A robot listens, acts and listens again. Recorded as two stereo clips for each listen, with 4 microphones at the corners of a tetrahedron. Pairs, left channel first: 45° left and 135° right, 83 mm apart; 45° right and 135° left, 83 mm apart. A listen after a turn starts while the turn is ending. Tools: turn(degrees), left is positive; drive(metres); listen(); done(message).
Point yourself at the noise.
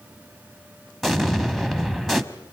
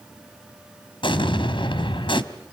turn(degrees=-45)
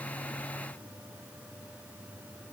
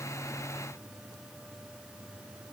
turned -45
done("I heard an explosion from this way, but can't make it out now.")